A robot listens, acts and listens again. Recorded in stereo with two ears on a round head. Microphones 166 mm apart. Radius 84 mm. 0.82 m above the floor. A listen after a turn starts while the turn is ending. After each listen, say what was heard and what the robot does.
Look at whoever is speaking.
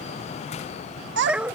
The child speaking: about 70° right or 110° right. Turn 70° right.
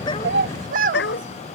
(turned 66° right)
So it is at 45° right. Turn 45° right.
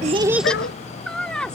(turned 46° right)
Found it: a child speaking, straight ahead.